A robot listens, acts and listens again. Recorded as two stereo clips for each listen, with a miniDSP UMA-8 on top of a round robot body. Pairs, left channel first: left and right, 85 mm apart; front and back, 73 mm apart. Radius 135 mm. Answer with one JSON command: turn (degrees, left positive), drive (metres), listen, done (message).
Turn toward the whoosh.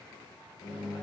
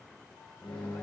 {"listen": true}
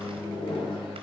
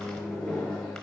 {"listen": true}
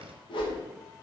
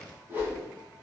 {"turn": 115}
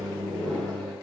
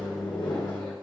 {"listen": true}
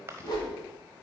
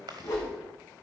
{"turn": 45}
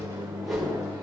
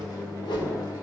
{"done": "Facing the whoosh, 2 to 4 m away."}